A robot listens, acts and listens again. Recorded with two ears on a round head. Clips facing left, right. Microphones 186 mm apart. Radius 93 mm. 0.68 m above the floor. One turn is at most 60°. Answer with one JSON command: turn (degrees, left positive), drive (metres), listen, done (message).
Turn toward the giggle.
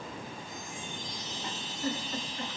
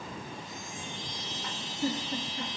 {"turn": -25}
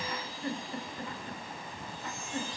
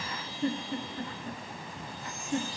{"turn": -60}
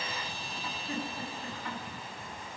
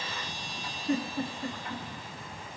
{"turn": -60}
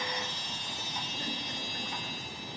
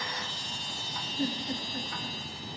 {"turn": -25}
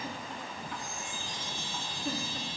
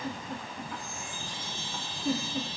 {"done": "Facing the giggle."}